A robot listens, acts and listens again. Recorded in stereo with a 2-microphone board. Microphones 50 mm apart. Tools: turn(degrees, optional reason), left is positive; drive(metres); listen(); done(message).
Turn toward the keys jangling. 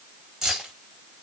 turn(degrees=-30)
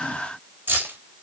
turn(degrees=-135, reason="So it is at 135° right.")
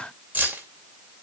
turn(degrees=-35, reason="The keys jangling is now 35° right.")
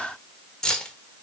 turn(degrees=15, reason="The keys jangling is now 15° left.")
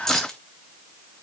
turn(degrees=10, reason="The keys jangling is now 10° left.")
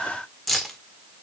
done("Facing the keys jangling, 1 to 2 m away.")